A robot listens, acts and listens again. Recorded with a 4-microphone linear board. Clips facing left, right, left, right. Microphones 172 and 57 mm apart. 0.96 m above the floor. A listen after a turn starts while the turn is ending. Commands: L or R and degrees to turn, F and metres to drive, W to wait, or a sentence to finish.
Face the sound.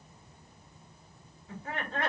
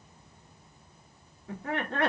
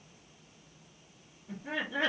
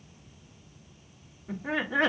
R65
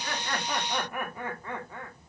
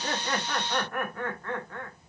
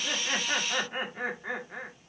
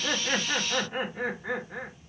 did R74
L10
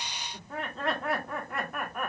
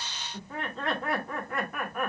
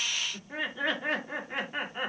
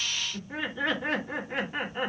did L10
Facing the laughter, 1 to 2 m away.